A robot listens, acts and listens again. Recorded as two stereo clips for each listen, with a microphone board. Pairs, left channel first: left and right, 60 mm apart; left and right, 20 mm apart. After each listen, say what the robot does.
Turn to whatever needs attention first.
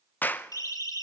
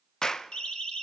Turn 65° left.
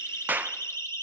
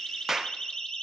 Turn 50° left.
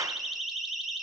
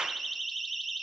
Facing the siren.